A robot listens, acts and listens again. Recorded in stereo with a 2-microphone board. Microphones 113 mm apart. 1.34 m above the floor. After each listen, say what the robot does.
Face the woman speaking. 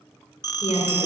Turn 90° left.
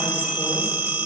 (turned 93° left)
Keep listening.
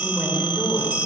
Found it: a woman speaking, straight ahead, over 4 m away.